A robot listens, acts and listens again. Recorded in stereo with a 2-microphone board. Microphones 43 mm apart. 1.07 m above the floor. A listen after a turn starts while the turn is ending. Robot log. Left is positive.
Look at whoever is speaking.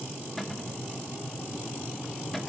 cmd idle
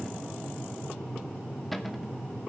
cmd idle
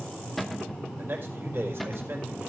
note: The man speaking: about 60° right or 120° right.
cmd yaw -60
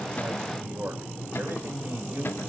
note: So it is at 60° right.
cmd yaw -60
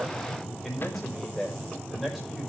end: Found it: a man speaking, straight ahead, over 4 m away.